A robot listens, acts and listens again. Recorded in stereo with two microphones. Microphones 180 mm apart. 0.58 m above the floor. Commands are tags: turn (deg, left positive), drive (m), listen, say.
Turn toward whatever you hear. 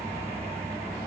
<listen/>
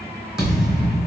<turn deg="-30"/>
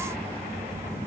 <listen/>
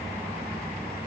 <say>I heard a thud, but can't make it out now. It was about 25° left or 145° right.</say>